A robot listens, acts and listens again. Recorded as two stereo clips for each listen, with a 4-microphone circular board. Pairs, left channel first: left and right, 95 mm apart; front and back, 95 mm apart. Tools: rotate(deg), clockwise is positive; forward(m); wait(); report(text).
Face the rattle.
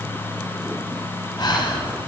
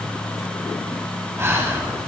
wait()
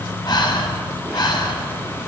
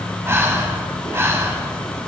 wait()
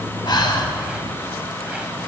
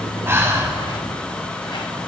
report("I can't make out a rattle, only breathing.")